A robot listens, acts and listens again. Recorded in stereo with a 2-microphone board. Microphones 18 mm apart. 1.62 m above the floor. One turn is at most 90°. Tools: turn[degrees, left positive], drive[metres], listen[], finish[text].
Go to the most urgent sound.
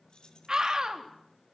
Thought: The scream: about 45° right or 135° right.
Action: turn[-45]
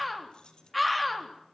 Action: drive[1.0]
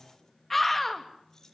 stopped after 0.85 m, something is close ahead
Thought: The scream is now 10° left.
Action: turn[10]
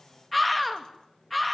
Action: finish[Something is in my way. I am facing the scream but have not reached it.]